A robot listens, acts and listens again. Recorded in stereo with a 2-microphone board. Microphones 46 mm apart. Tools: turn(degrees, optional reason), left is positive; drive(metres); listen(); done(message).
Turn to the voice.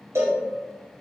listen()
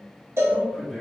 turn(degrees=30)
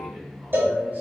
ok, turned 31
turn(degrees=-35, reason="So it is at 35° right.")
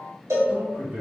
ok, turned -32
turn(degrees=-40, reason="The man speaking is now 40° right.")
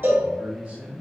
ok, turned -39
turn(degrees=-35, reason="The man speaking is now 35° right.")
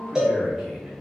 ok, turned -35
turn(degrees=-15, reason="The man speaking is now 15° right.")
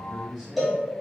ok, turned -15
done("Found it: a man speaking, straight ahead, 1 to 2 m away.")